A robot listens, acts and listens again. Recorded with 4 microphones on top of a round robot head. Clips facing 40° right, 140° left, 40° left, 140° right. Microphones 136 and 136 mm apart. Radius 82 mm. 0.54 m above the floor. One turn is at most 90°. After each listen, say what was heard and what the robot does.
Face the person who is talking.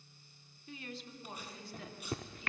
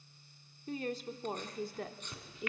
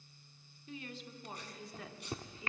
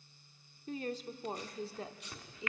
The woman speaking: 155° left. Turn 90° left.
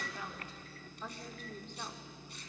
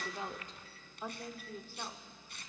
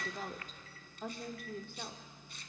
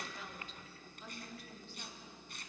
The woman speaking is now 55° left. Turn 55° left.
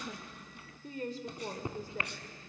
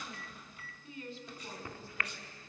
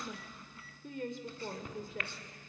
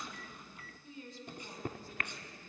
Facing the woman speaking.